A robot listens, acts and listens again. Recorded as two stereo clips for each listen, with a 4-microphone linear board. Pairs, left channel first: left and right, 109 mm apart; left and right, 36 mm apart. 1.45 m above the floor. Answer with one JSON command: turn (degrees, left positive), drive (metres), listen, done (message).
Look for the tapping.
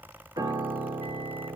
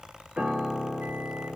{"listen": true}
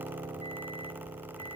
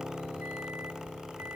{"listen": true}
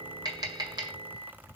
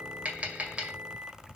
{"turn": -40}
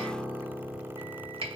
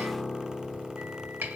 {"turn": -95}
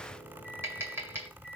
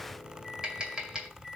{"turn": -25}
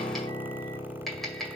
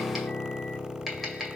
{"done": "Facing the tapping, 2 to 4 m away."}